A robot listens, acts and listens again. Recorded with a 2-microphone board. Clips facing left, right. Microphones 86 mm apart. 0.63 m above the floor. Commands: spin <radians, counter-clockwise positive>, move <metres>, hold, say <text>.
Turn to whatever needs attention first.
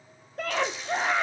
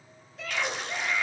spin 0.87
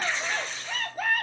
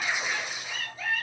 spin 1.13
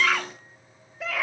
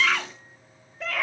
say Facing the scream, 1 to 2 m away.